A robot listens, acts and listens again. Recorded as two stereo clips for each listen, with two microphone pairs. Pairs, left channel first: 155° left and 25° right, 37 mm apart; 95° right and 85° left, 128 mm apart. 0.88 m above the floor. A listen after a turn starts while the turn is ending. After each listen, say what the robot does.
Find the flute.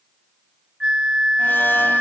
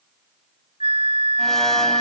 Turn 40° left.
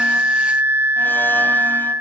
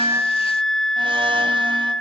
Found it: a flute, straight ahead.